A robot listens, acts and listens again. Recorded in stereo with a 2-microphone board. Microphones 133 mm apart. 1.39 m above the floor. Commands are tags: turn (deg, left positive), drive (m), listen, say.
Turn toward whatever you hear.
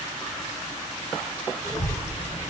<turn deg="-20"/>
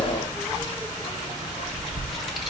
<say>Facing the child speaking.</say>